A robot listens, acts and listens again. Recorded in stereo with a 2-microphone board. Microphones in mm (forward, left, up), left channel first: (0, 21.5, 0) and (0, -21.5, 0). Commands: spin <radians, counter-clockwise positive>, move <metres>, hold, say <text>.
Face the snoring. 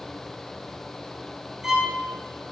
hold
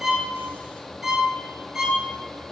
hold
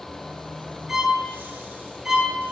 say I can't make out snoring to turn to.